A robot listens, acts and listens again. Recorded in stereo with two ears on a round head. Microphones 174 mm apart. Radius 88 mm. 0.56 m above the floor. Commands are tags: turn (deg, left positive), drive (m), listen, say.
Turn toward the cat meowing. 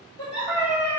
<turn deg="-30"/>
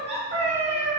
<turn deg="-140"/>
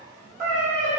<turn deg="-40"/>
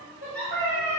<turn deg="20"/>
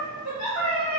<say>Facing the cat meowing.</say>